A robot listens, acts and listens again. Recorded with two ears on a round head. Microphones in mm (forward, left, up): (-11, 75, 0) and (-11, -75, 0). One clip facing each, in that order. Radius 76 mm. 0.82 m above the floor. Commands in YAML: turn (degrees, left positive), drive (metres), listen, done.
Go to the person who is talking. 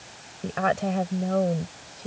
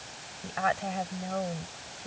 turn: 55
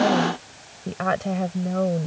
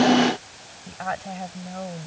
turn: 70
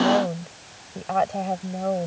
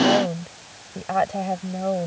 drive: 1.0
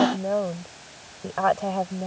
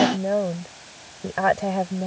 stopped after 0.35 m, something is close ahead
turn: -10
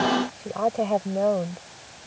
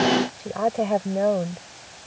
done: "Blocked. The woman speaking is further on, straight ahead."